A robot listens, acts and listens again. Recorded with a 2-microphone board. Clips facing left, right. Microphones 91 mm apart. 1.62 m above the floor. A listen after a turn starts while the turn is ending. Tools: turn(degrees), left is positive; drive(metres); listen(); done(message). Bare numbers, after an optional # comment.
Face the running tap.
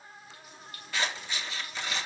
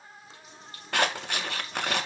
# The running tap: about 30° right or 150° right.
turn(-30)
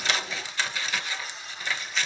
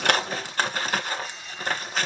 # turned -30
listen()
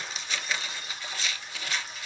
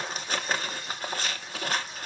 listen()
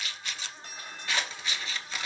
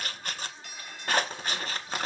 done("I heard a running tap, but can't make it out now. It was about straight ahead or 120° right.")